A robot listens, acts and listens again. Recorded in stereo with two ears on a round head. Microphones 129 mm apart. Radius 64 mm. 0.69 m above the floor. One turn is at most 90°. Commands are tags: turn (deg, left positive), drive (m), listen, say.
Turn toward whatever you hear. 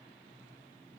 <listen/>
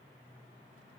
<listen/>
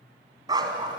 <turn deg="-30"/>
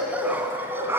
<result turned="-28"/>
<turn deg="-15"/>
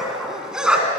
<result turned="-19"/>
<say>Facing the dog barking.</say>